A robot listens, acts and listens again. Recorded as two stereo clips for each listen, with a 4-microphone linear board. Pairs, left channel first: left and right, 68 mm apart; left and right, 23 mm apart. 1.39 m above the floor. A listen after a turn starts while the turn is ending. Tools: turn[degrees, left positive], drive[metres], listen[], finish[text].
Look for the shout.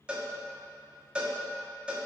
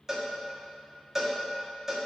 Action: listen[]
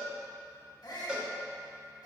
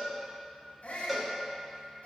Action: turn[90]
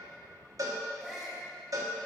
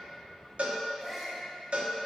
Action: finish[Found it: a shout, straight ahead, 2 to 4 m away.]